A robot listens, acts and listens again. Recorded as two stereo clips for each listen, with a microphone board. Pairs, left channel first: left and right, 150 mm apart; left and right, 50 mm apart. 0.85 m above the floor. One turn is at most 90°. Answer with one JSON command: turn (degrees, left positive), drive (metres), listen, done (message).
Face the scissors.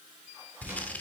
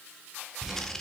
{"turn": 30}
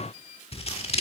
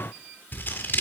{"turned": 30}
{"turn": 90}
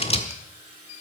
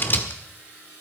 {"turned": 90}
{"turn": 40}
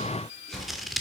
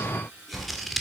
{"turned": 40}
{"done": "Found it: scissors, straight ahead, 1 to 2 m away."}